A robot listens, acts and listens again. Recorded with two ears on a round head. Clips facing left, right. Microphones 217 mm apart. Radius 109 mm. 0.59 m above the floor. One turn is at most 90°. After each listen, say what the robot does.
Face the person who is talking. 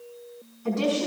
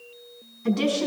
Turn 30° right.
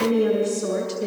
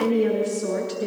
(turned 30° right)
Facing the woman speaking, over 4 m away.